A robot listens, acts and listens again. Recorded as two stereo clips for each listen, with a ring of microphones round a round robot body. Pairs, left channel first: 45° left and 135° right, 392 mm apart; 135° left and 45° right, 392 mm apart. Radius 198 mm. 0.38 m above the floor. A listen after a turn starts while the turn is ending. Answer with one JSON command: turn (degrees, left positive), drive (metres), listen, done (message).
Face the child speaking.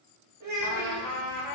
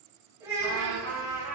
{"turn": -130}
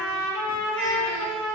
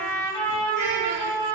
{"listen": true}
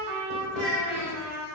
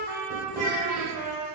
{"turn": -55}
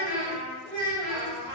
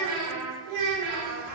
{"turn": -35}
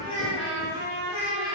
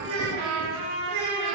{"turn": -20}
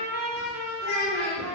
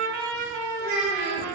{"done": "Found it: a child speaking, straight ahead, 1 to 2 m away."}